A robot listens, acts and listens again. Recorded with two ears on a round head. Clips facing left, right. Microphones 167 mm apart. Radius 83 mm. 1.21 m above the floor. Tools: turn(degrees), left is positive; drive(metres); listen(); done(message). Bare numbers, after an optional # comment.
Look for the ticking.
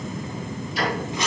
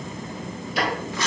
# The ticking: about 55° right or 125° right.
turn(-55)
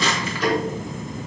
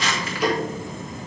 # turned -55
# So it is at 10° right.
turn(-10)
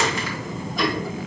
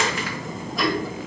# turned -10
done("Facing the ticking, 1 to 2 m away.")